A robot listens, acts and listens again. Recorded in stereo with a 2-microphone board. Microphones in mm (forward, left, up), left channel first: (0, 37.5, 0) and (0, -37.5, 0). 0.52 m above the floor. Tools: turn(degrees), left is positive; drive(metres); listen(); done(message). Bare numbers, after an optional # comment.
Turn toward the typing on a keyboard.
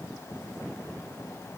listen()
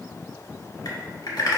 # The typing on a keyboard: about 65° left or 115° left.
turn(65)
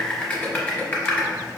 # So it is at 20° left.
turn(20)
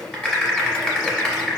# The typing on a keyboard is now 10° left.
turn(10)
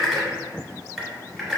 done("Found it: typing on a keyboard, straight ahead, 1 to 2 m away.")